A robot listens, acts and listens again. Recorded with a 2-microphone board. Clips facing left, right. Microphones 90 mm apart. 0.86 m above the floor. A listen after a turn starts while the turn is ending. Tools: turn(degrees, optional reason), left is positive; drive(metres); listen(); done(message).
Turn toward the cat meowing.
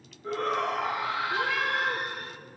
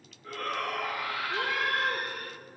turn(degrees=-30, reason="The cat meowing: about 30° right or 150° right.")
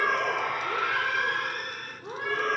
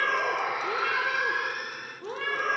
turn(degrees=-105, reason="So it is at 105° right.")
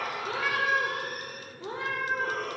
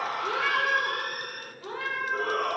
turn(degrees=25, reason="The cat meowing is now 25° left.")
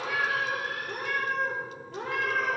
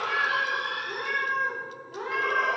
done("Found it: a cat meowing, straight ahead.")